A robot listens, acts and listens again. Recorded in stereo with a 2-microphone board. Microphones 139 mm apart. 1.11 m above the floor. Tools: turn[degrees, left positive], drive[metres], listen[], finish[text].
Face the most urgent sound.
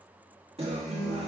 Action: listen[]
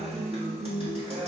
Action: listen[]
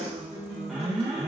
Action: turn[-30]
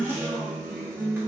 Thought: So it is at 25° left.
Action: turn[25]
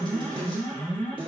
Thought: The alarm is now 10° left.
Action: turn[10]
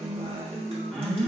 Action: finish[Facing the alarm.]